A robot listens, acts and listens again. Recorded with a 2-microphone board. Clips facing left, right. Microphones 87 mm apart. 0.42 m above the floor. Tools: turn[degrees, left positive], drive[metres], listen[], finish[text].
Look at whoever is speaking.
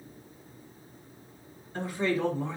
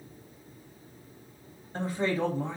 Thought: The man speaking: about 40° right or 140° right.
Action: turn[-40]
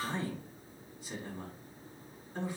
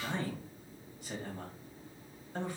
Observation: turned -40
Thought: So it is at 100° right.
Action: turn[-100]
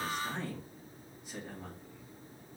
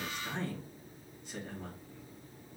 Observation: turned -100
Thought: The man speaking is now 10° left.
Action: turn[10]
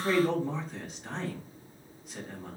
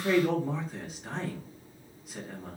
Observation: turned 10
Action: finish[Facing the man speaking.]